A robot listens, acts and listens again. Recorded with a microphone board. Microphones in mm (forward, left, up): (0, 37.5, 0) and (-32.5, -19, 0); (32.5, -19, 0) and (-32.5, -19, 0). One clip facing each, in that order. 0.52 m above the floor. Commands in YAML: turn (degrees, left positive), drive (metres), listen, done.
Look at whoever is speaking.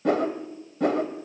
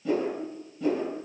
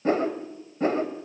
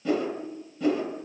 listen: true
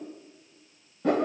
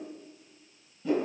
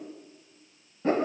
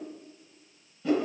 listen: true
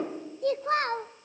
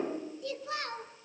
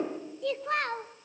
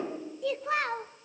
turn: 95
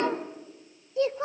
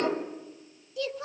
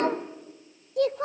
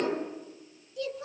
done: "Found it: a child speaking, straight ahead, under 1 m away."